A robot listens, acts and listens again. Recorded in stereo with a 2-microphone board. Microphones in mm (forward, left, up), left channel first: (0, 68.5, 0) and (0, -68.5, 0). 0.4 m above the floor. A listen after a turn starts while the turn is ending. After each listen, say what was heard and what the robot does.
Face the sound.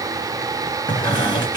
The squeak: about 30° left or 150° left. Turn 30° left.
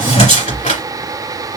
So it is at 120° left. Turn 120° left.
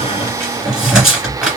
Found it: a squeak, straight ahead.